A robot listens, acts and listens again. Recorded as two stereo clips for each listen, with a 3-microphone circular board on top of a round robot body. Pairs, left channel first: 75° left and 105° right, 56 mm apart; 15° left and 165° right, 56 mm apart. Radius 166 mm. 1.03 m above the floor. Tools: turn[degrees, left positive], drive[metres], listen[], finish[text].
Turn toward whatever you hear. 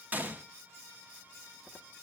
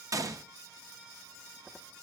Thought: The gunshot: 165° right.
Action: turn[-165]
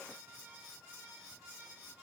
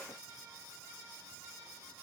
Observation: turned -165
Action: finish[Facing where the gunshot came from. I can't hear it now.]